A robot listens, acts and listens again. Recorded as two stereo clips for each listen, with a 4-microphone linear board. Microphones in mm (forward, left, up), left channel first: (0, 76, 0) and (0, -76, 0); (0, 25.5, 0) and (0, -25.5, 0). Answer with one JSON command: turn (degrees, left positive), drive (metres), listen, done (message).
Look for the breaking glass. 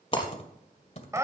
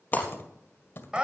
{"turn": 30}
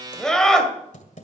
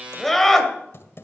{"listen": true}
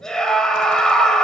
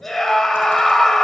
{"done": "I heard breaking glass, but can't make it out now. It was about straight ahead or 120° left."}